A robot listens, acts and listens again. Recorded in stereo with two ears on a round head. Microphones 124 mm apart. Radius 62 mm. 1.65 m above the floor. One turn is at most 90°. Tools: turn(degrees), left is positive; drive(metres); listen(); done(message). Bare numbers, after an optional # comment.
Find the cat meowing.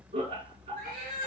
# The cat meowing: about 75° right or 105° right.
turn(-75)
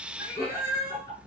# So it is at 20° right.
turn(-20)
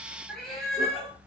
done("Found it: a cat meowing, straight ahead.")